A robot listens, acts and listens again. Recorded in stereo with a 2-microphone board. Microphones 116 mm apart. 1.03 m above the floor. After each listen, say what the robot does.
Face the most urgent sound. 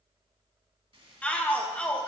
Turn 30° left.
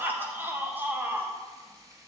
Turn 20° right.
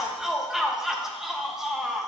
Found it: a shout, straight ahead, 1 to 2 m away.